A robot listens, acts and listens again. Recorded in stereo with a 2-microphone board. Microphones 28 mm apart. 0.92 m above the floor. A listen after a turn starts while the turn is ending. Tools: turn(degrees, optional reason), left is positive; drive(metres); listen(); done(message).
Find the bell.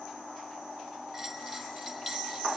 turn(degrees=-30)
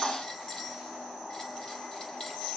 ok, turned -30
turn(degrees=25, reason="So it is at 25° left.")
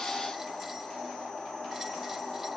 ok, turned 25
listen()
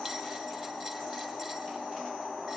listen()
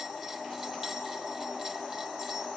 done("Facing where the bell came from. I can't hear it now.")